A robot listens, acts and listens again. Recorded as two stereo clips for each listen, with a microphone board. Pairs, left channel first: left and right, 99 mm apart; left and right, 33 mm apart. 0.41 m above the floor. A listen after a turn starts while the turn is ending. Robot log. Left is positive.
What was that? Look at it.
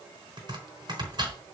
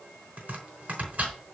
note: The chopping: about 55° right or 125° right.
cmd yaw -55
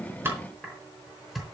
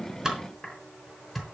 end: Found it: chopping, straight ahead.